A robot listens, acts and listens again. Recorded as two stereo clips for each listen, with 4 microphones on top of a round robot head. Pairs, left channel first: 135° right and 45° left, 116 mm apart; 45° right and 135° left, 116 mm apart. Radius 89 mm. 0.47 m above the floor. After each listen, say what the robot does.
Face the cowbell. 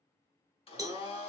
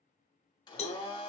Turn 20° right.
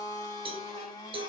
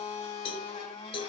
Found it: a cowbell, straight ahead.